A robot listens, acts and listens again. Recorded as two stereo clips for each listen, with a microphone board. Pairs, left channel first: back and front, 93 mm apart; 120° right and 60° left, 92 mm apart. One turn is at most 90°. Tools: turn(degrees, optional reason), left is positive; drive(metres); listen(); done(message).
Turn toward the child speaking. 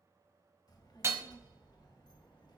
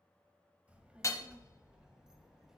turn(degrees=90, reason="The child speaking: 145° left.")
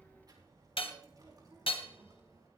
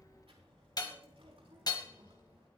turn(degrees=50, reason="The child speaking is now 50° left.")
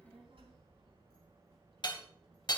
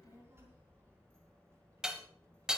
done("Facing the child speaking, over 4 m away.")